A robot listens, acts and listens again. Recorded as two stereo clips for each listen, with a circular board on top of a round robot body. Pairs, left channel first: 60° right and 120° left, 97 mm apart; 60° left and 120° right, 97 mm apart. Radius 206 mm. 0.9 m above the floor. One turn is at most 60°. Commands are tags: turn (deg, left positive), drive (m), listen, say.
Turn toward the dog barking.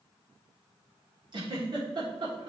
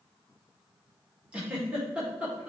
<listen/>
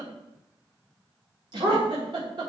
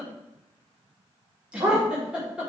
<turn deg="60"/>
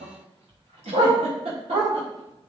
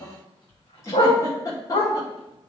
<turn deg="60"/>
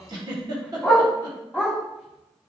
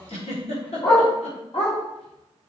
<turn deg="40"/>
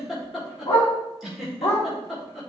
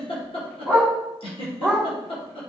<say>Facing the dog barking, 1 to 2 m away.</say>